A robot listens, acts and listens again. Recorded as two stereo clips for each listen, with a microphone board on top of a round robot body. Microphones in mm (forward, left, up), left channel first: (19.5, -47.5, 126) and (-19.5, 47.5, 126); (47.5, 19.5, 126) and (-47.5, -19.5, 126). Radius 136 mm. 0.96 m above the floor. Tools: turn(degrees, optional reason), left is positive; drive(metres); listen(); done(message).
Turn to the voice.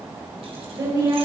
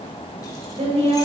turn(degrees=170, reason="The woman speaking: 170° left.")
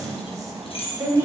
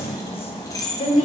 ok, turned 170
turn(degrees=50, reason="The woman speaking is now 50° left.")
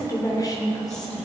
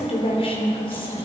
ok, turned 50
turn(degrees=-15, reason="The woman speaking is now 15° right.")
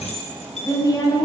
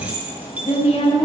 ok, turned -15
turn(degrees=-10, reason="The woman speaking is now 10° right.")
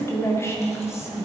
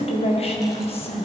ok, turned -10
done("Facing the woman speaking.")